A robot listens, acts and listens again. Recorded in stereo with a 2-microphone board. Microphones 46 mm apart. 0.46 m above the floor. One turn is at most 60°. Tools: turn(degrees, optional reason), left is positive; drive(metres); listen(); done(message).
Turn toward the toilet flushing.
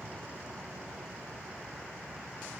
listen()
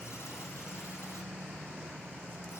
listen()
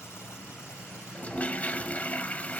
turn(degrees=35, reason="The toilet flushing: about 35° left or 145° left.")
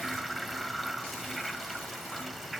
done("Facing the toilet flushing.")